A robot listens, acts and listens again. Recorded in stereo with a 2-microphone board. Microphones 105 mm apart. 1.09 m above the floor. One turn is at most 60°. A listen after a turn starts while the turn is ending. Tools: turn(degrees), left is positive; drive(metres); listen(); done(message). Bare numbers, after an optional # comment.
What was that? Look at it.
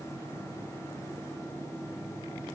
listen()
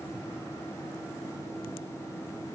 listen()
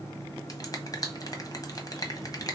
# The finger snap: about 40° left or 140° left.
turn(40)
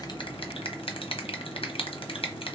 # So it is at 95° left.
turn(60)
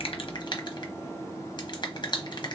# The finger snap is now 55° left.
turn(55)
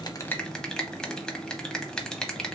done("Found it: a finger snap, straight ahead, under 1 m away.")